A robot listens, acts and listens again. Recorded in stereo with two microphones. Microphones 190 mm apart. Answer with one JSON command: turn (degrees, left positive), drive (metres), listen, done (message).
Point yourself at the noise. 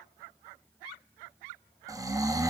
{"turn": -20}
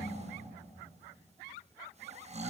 {"turn": -145}
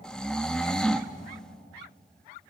{"done": "Found it: snoring, straight ahead, under 1 m away."}